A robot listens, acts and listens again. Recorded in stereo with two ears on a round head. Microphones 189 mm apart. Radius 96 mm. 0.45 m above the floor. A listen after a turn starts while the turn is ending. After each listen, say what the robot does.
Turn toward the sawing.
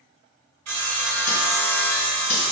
Turn 90° right.
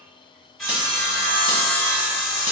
Found it: sawing, straight ahead.